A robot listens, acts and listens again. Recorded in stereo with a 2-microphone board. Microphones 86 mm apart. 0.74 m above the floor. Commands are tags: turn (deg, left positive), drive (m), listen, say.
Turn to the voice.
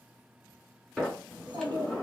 <turn deg="-60"/>
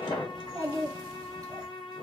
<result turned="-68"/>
<turn deg="-45"/>
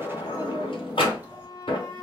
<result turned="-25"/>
<turn deg="-20"/>
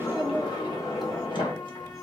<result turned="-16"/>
<say>Found it: a child speaking, straight ahead.</say>